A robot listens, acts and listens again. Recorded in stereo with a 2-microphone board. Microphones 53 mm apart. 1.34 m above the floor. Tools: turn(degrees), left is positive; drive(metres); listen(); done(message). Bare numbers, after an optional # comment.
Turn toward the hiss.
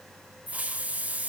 # The hiss: about 25° right or 155° right.
turn(-25)
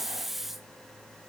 done("Facing the hiss, under 1 m away.")